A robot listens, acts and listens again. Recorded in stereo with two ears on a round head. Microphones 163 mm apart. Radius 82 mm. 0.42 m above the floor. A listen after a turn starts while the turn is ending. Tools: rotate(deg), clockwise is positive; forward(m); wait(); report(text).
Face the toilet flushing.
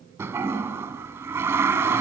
rotate(30)
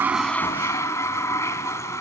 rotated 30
rotate(-15)
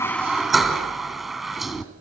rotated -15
report("Found it: a toilet flushing, straight ahead.")